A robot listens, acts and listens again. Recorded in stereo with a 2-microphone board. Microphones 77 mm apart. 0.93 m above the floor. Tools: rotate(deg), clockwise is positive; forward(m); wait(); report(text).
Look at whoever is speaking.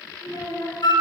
rotate(-50)
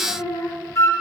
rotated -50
rotate(-80)
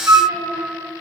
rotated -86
wait()
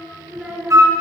rotate(10)
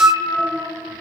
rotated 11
wait()
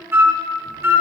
wait()
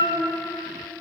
report("Found it: a child speaking, straight ahead.")